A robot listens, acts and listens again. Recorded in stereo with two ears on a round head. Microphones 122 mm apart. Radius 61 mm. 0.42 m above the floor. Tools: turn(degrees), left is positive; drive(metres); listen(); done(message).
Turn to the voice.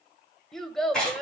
turn(degrees=30)
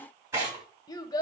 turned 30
turn(degrees=145)
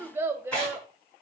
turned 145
turn(degrees=-20)
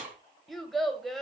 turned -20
done("Found it: a child speaking, straight ahead, 1 to 2 m away.")